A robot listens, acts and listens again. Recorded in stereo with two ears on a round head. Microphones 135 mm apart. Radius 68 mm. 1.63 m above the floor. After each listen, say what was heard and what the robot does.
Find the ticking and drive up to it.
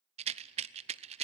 Keep listening.
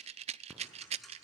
Turn 30° left.
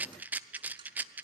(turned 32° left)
So it is at 30° right. Turn 30° right.
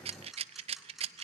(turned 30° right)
Drive 1.0 m forward.
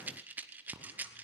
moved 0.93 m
The ticking is now 10° right. Turn 10° right.
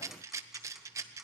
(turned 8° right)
Drive 1.0 m forward.
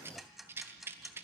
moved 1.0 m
Drive 1.0 m forward.
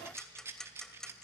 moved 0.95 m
Drive 1.0 m forward.
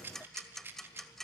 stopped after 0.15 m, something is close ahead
I am next to the ticking.